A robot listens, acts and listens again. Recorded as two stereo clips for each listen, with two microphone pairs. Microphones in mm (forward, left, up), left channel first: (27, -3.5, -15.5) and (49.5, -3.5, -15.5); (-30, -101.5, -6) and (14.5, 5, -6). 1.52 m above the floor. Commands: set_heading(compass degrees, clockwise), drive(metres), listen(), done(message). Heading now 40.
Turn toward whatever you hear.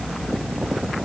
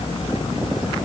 listen()
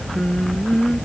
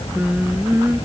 set_heading(265)
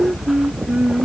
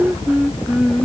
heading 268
set_heading(293)
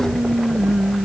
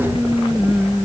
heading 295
set_heading(310)
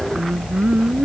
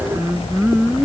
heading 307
set_heading(322)
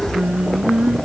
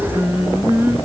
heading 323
done("Found it: singing, straight ahead.")